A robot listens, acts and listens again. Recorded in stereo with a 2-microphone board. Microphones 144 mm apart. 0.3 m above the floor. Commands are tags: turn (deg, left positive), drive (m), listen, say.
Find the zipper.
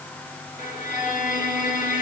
<listen/>
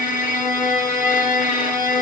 <listen/>
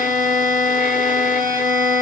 <say>I can't make out a zipper to turn to.</say>